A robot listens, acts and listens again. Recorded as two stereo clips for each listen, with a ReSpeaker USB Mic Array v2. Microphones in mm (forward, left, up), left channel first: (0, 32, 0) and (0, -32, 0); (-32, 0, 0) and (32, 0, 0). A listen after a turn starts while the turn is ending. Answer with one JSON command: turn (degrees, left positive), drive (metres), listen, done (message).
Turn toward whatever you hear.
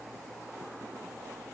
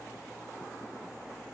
{"listen": true}
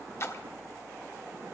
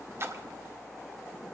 {"turn": 45}
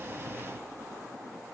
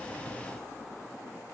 {"done": "Facing where the splash came from. I can't hear it now."}